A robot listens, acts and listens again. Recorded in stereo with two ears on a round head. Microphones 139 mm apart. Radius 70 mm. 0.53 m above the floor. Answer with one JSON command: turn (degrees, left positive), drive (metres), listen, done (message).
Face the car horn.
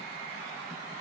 {"listen": true}
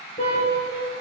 {"turn": 40}
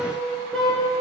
{"done": "Found it: a car horn, straight ahead, over 4 m away."}